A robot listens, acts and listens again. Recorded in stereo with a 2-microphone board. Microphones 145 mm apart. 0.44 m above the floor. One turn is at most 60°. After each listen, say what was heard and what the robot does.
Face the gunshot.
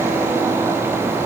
Keep listening.
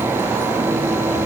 Keep listening.
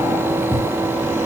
I can't make out a gunshot to turn to.